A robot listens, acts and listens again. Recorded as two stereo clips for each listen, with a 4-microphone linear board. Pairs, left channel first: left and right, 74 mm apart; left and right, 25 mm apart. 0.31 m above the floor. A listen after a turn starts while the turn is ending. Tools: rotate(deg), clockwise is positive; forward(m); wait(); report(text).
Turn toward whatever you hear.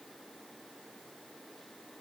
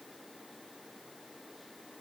wait()
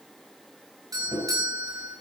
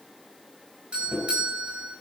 rotate(55)
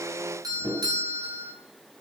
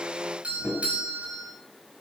rotate(65)
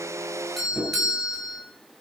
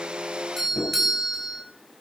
report("Found it: a doorbell, straight ahead, over 4 m away.")